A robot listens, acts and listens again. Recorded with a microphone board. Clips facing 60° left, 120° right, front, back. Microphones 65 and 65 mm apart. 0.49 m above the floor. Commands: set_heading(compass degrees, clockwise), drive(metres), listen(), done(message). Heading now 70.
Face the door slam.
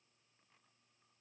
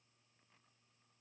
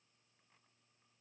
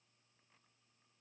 listen()
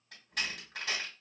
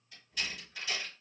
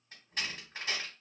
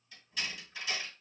set_heading(25)
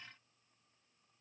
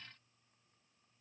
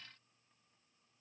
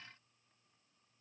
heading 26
done("I heard a door slam from this way, but can't make it out now.")